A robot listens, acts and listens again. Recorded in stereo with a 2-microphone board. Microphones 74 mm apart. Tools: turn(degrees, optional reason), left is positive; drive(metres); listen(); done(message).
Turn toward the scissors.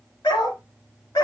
listen()
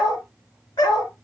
listen()
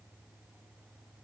done("I can't make out scissors, only a dog barking.")